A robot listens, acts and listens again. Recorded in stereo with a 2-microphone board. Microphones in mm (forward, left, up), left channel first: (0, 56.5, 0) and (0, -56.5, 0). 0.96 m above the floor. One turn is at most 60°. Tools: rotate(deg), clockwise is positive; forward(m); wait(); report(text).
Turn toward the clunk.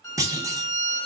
rotate(30)
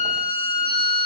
wait()
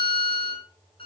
report("I heard a clunk, but can't make it out now. It was about straight ahead or 120° right.")